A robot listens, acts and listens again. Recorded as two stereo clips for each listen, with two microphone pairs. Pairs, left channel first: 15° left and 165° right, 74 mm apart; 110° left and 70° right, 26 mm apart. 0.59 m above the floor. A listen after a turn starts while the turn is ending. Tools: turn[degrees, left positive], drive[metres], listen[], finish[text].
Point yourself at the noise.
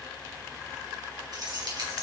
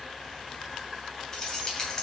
Thought: The keys jangling: 175° left.
Action: turn[175]
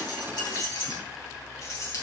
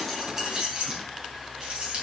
Thought: The keys jangling is now 25° right.
Action: turn[-25]
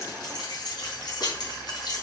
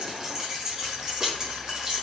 Action: finish[Found it: keys jangling, straight ahead, over 4 m away.]